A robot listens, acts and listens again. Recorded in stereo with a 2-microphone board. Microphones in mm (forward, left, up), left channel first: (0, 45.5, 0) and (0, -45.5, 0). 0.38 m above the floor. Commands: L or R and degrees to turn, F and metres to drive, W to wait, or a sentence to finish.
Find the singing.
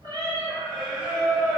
R30
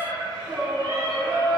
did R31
R125
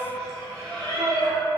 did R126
L15
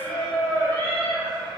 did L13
Facing the singing.